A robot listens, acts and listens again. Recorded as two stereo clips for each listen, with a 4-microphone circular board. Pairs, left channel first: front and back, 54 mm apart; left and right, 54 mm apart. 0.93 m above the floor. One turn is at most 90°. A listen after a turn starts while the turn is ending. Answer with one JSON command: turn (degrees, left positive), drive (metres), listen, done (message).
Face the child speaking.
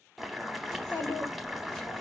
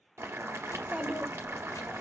{"turn": -20}
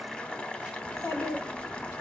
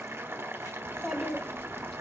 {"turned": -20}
{"turn": 10}
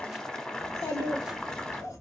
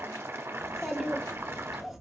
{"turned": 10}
{"done": "Found it: a child speaking, straight ahead."}